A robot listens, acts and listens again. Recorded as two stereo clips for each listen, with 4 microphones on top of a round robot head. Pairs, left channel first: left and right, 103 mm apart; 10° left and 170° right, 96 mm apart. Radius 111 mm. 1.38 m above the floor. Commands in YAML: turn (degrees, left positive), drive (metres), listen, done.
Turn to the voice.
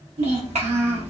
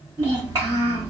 turn: -115
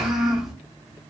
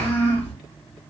done: "Found it: a child speaking, straight ahead, 1 to 2 m away."